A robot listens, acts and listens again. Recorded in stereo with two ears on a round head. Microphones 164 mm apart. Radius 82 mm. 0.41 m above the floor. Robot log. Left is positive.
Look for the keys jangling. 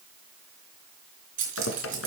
note: The keys jangling: about 45° right or 135° right.
cmd yaw -45
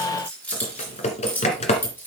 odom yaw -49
note: So it is at 10° left.
cmd yaw +10
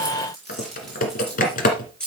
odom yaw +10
end: Found it: keys jangling, straight ahead.